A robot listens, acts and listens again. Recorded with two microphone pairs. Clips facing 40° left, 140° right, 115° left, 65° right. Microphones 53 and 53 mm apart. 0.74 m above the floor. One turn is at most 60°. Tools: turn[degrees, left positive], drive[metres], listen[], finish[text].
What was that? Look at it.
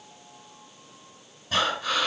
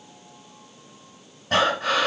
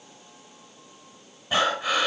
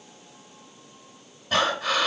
Thought: The breathing: 165° right.
Action: turn[-60]
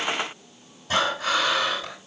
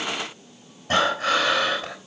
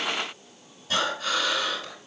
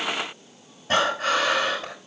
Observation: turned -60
Thought: The breathing is now 100° right.
Action: turn[-60]
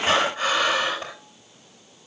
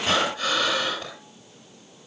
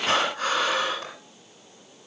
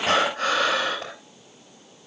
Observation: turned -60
Thought: The breathing is now 25° right.
Action: turn[-25]
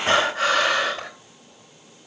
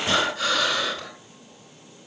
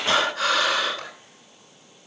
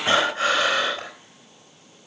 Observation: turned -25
Action: finish[Found it: breathing, straight ahead, over 4 m away.]